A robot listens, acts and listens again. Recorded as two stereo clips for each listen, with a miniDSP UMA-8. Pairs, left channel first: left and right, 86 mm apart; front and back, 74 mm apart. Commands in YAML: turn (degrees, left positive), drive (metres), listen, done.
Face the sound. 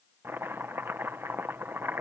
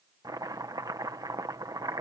turn: -155
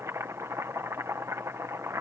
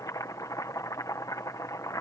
turn: -40
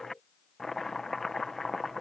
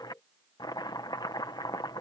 done: "Found it: chopping, straight ahead."